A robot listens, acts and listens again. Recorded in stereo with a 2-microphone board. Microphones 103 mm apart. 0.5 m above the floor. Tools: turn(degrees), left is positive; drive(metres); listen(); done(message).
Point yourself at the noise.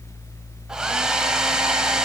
turn(degrees=-30)
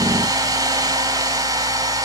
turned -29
turn(degrees=-145)
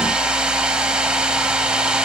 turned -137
turn(degrees=-10)
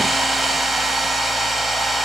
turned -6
done("Facing the hair dryer.")